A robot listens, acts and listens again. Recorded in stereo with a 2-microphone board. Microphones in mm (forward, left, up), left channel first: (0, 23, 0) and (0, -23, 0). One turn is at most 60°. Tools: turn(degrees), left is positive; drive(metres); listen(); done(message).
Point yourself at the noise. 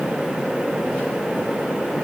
listen()
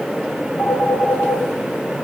turn(degrees=60)
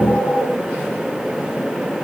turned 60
turn(degrees=10)
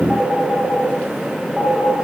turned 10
done("Found it: a phone ringing, straight ahead.")